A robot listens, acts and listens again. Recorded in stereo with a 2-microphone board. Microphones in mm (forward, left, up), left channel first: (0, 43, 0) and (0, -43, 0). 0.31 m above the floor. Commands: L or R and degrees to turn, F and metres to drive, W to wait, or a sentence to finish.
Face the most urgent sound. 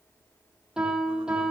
W
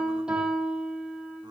W
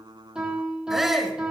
R30
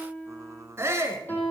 R145
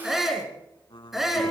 Facing the shout, 2 to 4 m away.